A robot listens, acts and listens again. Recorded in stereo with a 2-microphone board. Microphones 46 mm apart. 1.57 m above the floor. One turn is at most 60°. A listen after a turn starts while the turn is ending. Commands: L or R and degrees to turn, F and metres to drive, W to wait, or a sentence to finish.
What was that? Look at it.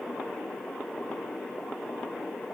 W
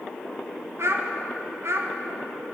R60
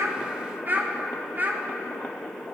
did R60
R40
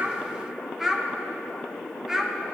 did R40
R10
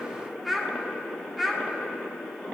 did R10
Facing the child speaking, under 1 m away.